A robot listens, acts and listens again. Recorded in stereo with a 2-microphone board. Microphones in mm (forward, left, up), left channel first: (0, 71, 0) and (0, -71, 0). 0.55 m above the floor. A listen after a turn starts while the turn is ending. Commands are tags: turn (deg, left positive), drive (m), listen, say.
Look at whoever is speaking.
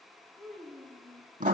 <turn deg="30"/>
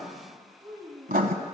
<turn deg="-25"/>
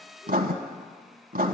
<listen/>
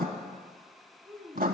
<say>Facing the child speaking, 2 to 4 m away.</say>